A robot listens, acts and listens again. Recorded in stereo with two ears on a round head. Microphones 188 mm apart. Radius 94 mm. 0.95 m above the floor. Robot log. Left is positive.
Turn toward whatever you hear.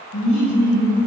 note: The laughter: about 60° left or 120° left.
cmd yaw +60
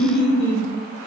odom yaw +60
note: So it is at 55° left.
cmd yaw +55
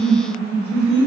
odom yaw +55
note: The laughter is now 30° left.
cmd yaw +30
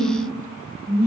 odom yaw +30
note: The laughter is now 15° left.
cmd yaw +15
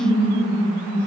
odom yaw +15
note: The laughter is now 10° left.
cmd yaw +10
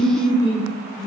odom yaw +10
end: Found it: laughter, straight ahead, 2 to 4 m away.